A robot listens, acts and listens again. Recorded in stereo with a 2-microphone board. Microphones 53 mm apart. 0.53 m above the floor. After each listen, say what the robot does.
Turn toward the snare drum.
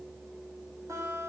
Keep listening.
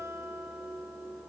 Keep listening.
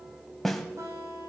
Turn 30° left.
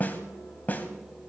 Turn 145° left.
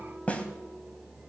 Turn 25° left.
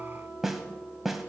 Found it: a snare drum, straight ahead, 1 to 2 m away.